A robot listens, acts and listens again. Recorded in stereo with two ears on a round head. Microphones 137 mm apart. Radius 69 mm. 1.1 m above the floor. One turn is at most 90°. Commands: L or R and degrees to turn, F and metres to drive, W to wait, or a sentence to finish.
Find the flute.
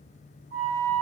R65
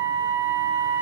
R15
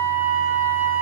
Facing the flute.